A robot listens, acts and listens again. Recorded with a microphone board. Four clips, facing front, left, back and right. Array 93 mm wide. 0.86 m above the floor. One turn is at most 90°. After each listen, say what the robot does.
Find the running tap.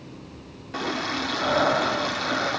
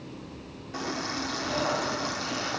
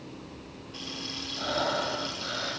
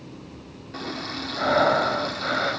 Turn 15° left.
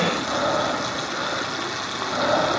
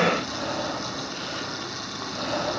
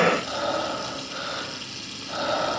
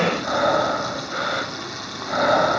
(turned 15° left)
Facing the running tap.